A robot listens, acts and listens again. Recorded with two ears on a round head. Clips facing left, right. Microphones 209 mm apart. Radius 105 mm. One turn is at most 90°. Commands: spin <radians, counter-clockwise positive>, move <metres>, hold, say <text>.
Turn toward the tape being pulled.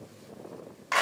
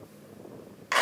hold
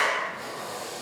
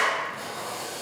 spin -1.31
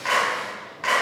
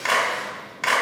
spin -0.44
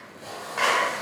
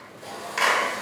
say Found it: tape being pulled, straight ahead.